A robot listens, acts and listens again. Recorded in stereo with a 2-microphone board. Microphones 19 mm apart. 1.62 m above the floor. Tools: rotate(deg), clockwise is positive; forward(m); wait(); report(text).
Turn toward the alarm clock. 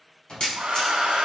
rotate(-40)
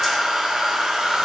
wait()
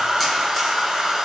wait()
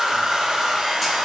report("I heard an alarm clock, but can't make it out now. It was about straight ahead or 100° left.")